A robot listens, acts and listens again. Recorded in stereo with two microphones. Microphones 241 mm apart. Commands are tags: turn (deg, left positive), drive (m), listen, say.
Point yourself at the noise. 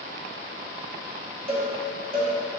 <turn deg="-35"/>
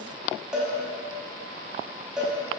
<say>Facing the cowbell, under 1 m away.</say>